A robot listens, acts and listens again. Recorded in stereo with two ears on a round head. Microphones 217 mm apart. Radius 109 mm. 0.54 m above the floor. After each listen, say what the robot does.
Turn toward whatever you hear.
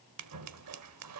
Turn 75° right.
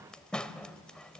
Facing the scissors, under 1 m away.